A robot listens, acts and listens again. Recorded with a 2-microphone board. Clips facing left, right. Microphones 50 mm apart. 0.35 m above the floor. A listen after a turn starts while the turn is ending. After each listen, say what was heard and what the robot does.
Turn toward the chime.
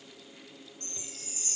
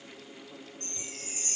The chime: about 45° right or 135° right. Turn 45° right.
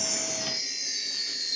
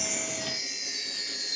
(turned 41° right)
Facing the chime.